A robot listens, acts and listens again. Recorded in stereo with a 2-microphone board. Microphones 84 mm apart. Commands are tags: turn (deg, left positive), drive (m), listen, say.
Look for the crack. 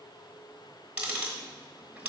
<listen/>
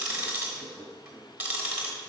<listen/>
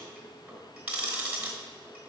<say>I can't make out a crack to turn to.</say>